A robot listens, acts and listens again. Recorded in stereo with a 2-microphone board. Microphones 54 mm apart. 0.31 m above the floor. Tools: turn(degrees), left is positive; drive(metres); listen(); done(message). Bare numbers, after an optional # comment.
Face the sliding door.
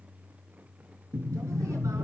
# The sliding door: about 50° right or 130° right.
turn(-50)
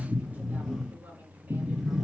done("Found it: a sliding door, straight ahead, 2 to 4 m away.")